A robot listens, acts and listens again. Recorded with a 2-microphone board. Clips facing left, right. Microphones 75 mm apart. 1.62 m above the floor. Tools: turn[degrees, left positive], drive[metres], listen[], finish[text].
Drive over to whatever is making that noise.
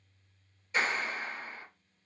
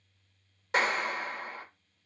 Action: turn[-90]
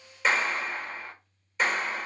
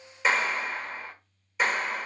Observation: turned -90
Action: drive[1.0]
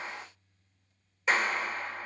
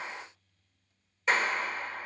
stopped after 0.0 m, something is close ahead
Action: finish[Something is in my way. I am facing the clap but have not reached it.]